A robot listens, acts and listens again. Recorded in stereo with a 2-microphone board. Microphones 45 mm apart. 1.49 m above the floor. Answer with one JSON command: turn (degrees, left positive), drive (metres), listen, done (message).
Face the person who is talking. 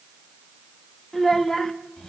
{"turn": 15}
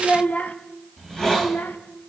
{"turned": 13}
{"turn": 125}
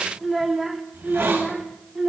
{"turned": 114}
{"turn": -15}
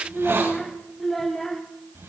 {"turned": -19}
{"done": "Found it: a child speaking, straight ahead."}